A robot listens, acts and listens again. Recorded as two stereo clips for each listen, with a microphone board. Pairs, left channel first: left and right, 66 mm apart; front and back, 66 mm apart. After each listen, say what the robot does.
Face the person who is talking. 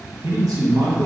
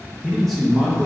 Turn 90° right.
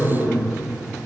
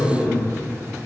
Found it: a man speaking, straight ahead, under 1 m away.